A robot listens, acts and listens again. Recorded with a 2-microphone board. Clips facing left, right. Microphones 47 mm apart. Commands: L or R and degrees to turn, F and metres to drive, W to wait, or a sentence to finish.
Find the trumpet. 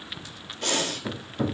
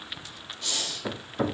W
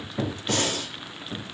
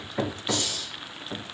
W
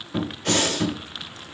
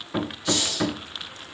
I can't make out a trumpet to turn to.